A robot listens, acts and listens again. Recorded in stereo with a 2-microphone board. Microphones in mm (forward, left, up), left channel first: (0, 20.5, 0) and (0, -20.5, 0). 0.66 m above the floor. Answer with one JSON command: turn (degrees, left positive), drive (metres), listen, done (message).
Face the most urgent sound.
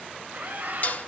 {"turn": -45}
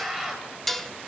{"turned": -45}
{"done": "Facing the scream, 2 to 4 m away."}